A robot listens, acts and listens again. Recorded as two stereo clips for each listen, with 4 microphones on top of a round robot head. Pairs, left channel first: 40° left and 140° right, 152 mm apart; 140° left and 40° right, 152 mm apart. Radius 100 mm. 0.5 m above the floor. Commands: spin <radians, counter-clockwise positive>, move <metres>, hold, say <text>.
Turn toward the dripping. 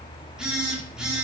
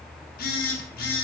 hold
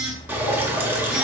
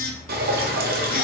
spin -1.13
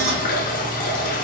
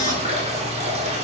say Facing the dripping.